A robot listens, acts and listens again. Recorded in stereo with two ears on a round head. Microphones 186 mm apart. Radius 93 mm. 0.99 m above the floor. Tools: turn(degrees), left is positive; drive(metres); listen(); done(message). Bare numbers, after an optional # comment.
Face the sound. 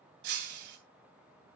# The breaking glass: about 55° right or 125° right.
turn(-55)
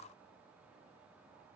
listen()
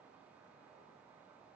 done("I heard breaking glass, but can't make it out now. It was about straight ahead or 70° right.")